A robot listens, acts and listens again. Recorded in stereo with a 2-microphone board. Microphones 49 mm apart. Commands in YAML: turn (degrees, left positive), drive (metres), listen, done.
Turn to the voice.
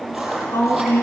turn: 60
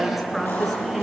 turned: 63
done: "Facing the woman speaking, over 4 m away."